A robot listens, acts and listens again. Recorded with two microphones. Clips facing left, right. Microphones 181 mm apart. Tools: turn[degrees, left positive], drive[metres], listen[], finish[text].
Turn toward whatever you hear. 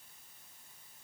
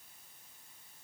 Action: listen[]
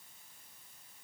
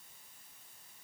Action: listen[]
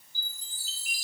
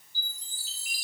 Thought: The chime: about 50° left or 130° left.
Action: turn[50]
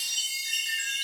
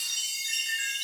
Action: finish[Found it: a chime, straight ahead, over 4 m away.]